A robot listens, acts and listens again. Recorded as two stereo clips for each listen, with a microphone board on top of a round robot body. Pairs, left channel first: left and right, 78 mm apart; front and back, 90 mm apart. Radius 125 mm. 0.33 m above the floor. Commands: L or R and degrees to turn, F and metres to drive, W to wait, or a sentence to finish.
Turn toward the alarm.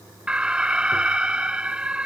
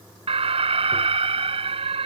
R170
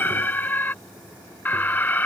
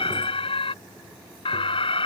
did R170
L25
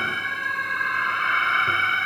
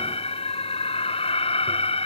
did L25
Found it: an alarm, straight ahead.